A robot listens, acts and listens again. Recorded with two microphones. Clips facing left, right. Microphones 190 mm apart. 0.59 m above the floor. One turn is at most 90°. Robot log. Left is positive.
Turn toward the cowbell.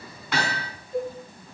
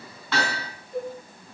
note: The cowbell: about 45° right or 135° right.
cmd yaw -45
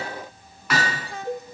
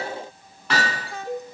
note: So it is at 90° right.
cmd yaw -90
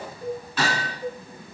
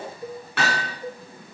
note: The cowbell is now 10° right.
cmd yaw -10
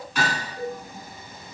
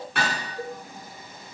end: Facing the cowbell, 2 to 4 m away.